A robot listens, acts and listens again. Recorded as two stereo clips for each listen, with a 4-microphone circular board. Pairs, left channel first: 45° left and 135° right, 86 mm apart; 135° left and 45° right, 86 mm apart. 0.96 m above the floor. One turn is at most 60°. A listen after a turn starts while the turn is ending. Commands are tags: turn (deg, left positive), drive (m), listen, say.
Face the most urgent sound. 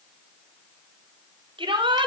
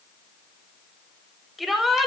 <turn deg="-60"/>
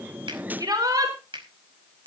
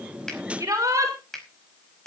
<turn deg="-60"/>
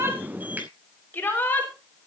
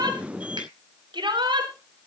<turn deg="-25"/>
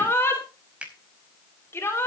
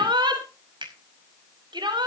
<turn deg="-15"/>
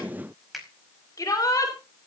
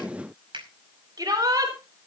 <say>Facing the shout.</say>